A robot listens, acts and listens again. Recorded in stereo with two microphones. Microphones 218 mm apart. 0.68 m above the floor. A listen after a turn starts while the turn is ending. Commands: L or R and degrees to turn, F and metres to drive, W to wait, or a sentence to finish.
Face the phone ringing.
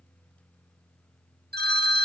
R50
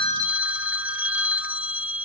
R10
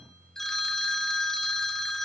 Facing the phone ringing, 1 to 2 m away.